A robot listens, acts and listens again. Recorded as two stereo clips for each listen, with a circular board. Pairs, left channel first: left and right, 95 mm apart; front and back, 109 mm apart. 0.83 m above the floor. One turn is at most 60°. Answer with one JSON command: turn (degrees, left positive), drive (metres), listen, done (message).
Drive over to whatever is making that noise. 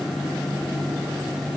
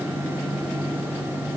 {"listen": true}
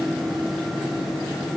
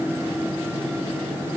{"listen": true}
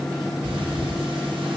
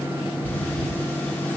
{"turn": -60}
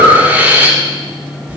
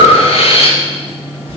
{"turn": -20}
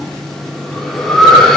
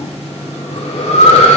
{"drive": 1.0}
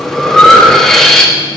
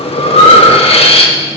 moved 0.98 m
{"drive": 1.0}
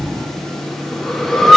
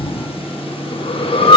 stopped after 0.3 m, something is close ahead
{"done": "I am next to the breathing."}